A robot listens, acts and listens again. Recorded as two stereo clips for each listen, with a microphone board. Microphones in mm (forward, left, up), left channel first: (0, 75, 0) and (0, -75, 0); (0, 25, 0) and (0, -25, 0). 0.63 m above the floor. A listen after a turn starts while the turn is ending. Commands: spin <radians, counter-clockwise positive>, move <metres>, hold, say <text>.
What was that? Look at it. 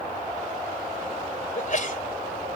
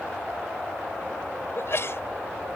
spin 1.05
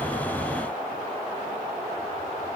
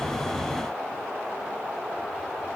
hold
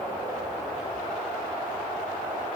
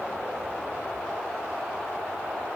say I heard a sneeze, but can't make it out now. It was about straight ahead or 60° left.